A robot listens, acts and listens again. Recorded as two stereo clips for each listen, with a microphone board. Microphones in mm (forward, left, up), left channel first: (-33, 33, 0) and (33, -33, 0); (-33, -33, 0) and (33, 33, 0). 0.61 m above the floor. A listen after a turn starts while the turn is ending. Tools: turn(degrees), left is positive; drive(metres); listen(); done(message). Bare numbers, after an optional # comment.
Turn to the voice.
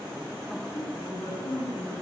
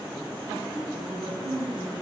# The woman speaking: 80° left.
turn(80)
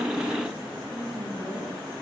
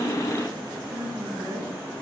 done("Facing the woman speaking.")